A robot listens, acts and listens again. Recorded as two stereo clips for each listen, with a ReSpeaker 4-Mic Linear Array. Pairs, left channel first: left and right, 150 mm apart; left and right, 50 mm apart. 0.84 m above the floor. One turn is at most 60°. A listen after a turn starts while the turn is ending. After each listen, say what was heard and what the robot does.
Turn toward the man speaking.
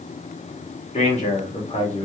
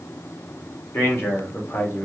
The man speaking: about 45° left or 135° left. Turn 45° left.
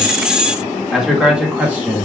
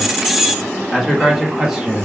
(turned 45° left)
So it is at 15° right. Turn 15° right.
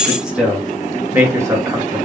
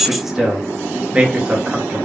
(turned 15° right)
The man speaking is now 20° right. Turn 20° right.
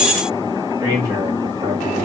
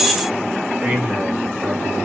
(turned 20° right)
The man speaking is now 30° right. Turn 30° right.
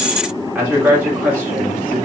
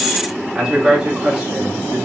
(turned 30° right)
The man speaking is now 10° right. Turn 10° right.
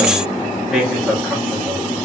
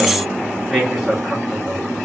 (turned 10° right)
Found it: a man speaking, straight ahead, 1 to 2 m away.